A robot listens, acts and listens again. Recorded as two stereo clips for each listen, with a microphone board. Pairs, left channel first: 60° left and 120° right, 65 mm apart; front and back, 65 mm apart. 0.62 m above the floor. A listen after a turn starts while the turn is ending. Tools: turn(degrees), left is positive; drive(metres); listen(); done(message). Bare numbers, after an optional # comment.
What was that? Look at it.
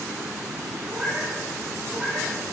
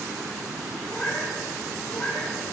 # The cat meowing: 50° right.
turn(-50)
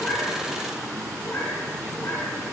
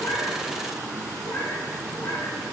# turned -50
# The cat meowing is now 35° left.
turn(35)
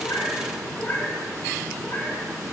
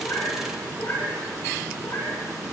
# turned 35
# The cat meowing is now 20° left.
turn(20)
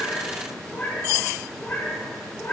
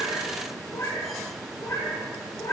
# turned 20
done("Facing the cat meowing.")